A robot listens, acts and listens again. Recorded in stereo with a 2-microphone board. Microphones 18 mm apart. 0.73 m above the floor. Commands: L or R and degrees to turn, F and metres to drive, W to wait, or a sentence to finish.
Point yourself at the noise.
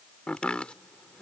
L75
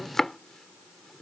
L25
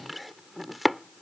Facing the chopping.